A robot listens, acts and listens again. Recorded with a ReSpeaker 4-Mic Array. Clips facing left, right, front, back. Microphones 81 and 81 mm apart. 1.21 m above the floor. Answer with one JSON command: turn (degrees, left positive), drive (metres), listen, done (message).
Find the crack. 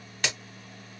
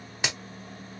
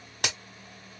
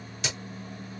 {"turn": -20}
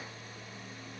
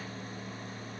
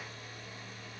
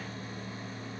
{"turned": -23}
{"done": "Facing where the crack came from. I can't hear it now."}